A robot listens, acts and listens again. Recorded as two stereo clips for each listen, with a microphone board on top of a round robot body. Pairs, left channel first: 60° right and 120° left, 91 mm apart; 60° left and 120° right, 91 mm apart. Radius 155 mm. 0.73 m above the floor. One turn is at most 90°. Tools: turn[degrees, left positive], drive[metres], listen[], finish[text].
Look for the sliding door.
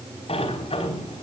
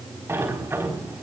Thought: The sliding door: 55° right.
Action: turn[-55]
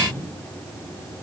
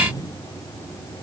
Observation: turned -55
Action: finish[Facing the sliding door.]